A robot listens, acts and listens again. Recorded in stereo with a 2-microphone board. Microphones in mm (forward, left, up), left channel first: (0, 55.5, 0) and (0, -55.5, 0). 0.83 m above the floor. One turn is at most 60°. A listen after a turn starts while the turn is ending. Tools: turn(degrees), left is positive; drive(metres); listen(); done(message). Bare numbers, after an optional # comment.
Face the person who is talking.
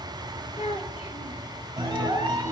turn(60)
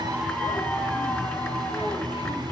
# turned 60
# Nothing new. It was at 30° left.
turn(30)
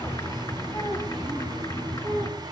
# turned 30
# The child speaking is now 40° left.
turn(40)
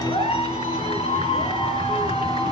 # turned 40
listen()
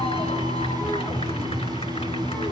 listen()
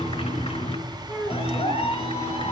done("Found it: a child speaking, straight ahead.")